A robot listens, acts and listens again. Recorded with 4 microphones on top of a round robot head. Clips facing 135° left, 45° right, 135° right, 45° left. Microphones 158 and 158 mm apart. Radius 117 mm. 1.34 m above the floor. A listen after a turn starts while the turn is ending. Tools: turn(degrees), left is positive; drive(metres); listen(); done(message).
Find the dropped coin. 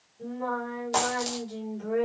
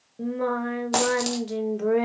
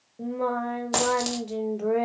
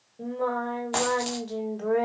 turn(degrees=-85)
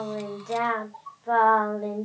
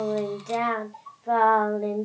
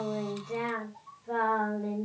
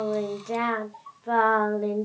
done("Facing where the dropped coin came from. I can't hear it now.")